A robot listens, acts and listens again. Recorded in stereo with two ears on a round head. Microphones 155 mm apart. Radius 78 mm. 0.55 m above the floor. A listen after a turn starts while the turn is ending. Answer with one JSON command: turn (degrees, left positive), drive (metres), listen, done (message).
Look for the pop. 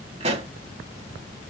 {"turn": -40}
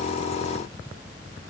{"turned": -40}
{"listen": true}
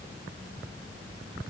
{"done": "I heard a pop, but can't make it out now. It was about straight ahead or 100° right."}